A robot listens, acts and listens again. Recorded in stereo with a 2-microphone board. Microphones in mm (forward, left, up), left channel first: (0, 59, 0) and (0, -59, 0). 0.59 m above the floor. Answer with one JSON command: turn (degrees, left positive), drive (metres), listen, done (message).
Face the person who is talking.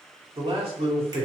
{"turn": -50}
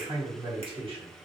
{"turn": -65}
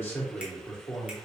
{"turn": 25}
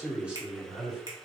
{"turn": -10}
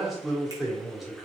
{"done": "Facing the man speaking."}